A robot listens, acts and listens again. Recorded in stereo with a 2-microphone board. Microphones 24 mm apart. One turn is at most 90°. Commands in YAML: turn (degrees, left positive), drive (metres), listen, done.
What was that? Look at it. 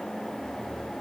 listen: true
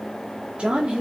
turn: -40
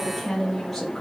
turn: 10
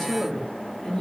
turn: 10
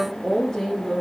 turn: 10
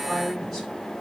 done: "Found it: a woman speaking, straight ahead."